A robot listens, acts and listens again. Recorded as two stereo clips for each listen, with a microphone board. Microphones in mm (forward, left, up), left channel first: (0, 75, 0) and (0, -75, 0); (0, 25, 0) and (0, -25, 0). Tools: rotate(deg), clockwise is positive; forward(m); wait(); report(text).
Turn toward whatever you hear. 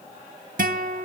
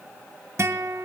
rotate(65)
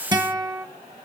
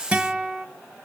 rotate(30)
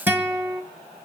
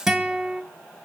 rotate(15)
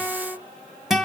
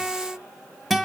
report("Found it: a guitar, straight ahead.")